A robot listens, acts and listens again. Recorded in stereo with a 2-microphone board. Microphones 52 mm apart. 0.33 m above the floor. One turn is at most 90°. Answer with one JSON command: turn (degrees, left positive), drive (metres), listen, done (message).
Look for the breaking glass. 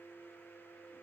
{"listen": true}
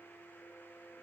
{"listen": true}
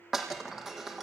{"turn": -30}
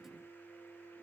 {"listen": true}
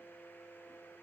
{"done": "I heard breaking glass, but can't make it out now. It was about 20° left or 140° right."}